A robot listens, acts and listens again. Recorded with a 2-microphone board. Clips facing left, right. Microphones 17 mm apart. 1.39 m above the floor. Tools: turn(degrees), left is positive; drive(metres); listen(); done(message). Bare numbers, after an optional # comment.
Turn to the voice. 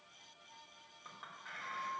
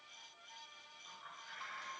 listen()
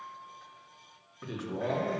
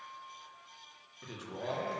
turn(-30)
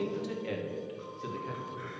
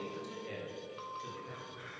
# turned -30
# So it is at 20° left.
turn(20)
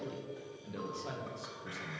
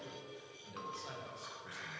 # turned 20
done("Found it: a man speaking, straight ahead, 1 to 2 m away.")